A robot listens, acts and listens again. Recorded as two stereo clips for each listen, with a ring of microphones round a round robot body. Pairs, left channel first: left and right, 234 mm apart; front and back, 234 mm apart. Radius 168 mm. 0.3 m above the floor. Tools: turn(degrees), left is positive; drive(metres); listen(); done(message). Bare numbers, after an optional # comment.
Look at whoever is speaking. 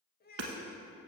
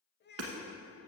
# The child speaking: 45° left.
turn(45)
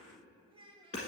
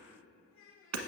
# The child speaking is now 20° right.
turn(-20)
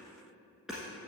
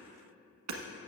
listen()
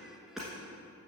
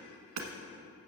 listen()
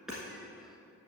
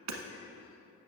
done("I heard a child speaking from this way, but can't make it out now.")